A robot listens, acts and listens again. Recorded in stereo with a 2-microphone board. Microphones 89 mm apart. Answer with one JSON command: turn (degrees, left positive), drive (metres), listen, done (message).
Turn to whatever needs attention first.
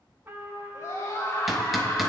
{"turn": 35}
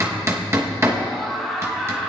{"done": "Found it: a scream, straight ahead, 2 to 4 m away."}